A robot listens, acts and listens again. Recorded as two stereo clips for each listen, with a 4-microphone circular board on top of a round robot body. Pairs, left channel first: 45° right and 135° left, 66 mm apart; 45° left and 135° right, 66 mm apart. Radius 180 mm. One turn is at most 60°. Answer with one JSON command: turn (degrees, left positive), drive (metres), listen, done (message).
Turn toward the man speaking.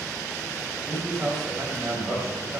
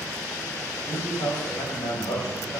{"turn": 50}
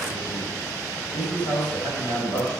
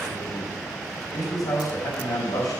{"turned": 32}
{"turn": 20}
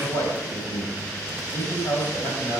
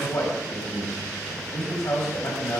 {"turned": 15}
{"done": "Facing the man speaking, over 4 m away."}